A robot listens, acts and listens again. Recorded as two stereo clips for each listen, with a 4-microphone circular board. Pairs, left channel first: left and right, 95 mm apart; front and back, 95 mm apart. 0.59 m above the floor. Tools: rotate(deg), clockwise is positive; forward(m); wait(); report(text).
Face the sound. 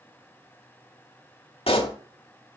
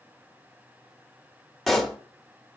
rotate(-90)
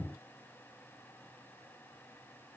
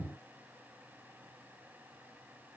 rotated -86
report("I heard a pop from this way, but can't make it out now.")